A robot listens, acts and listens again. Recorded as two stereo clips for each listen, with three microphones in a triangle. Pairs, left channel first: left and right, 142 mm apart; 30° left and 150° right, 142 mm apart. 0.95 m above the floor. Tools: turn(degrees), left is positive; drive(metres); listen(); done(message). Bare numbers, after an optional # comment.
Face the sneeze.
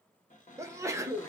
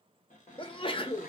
# The sneeze: 20° right.
turn(-20)
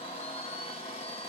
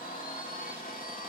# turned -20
done("Facing where the sneeze came from. I can't hear it now.")